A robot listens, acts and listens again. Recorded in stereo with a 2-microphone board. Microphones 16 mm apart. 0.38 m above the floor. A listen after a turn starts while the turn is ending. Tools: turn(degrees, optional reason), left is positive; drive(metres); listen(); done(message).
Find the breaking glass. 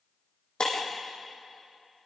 turn(degrees=50, reason="The breaking glass: about 50° left or 130° left.")
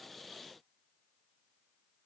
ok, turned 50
listen()
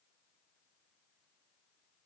done("I heard breaking glass, but can't make it out now. It was about straight ahead or 80° left.")